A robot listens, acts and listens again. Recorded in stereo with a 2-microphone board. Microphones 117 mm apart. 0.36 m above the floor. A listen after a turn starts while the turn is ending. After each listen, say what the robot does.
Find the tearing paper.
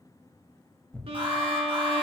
Turn 30° left.
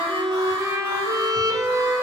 Keep listening.
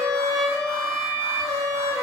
Keep listening.
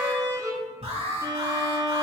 Turn 20° right.
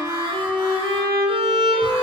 Keep listening.
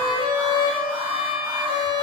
Keep listening.
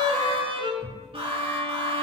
Facing the tearing paper.